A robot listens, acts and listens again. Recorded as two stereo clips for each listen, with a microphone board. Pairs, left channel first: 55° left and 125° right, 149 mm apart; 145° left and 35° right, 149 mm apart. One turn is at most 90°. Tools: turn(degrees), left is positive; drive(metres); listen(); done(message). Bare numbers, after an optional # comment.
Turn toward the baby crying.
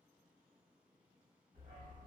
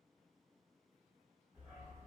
listen()
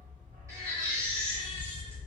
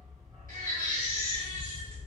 # The baby crying: 55° right.
turn(-55)
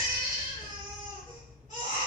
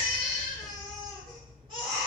# The baby crying is now 20° left.
turn(20)
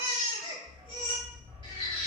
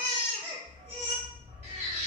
done("Facing the baby crying.")